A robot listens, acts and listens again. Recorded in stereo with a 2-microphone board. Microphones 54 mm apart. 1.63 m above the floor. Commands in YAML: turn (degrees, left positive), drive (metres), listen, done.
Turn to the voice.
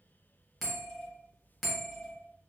listen: true
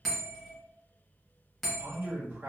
turn: -35
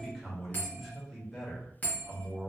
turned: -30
done: "Found it: a man speaking, straight ahead."